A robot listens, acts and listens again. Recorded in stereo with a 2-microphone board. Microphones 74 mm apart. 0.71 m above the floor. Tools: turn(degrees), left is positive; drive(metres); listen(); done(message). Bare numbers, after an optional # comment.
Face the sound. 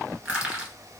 turn(-30)
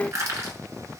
# So it is at 140° right.
turn(-140)
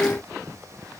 listen()
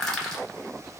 done("Found it: crushing, straight ahead, 1 to 2 m away.")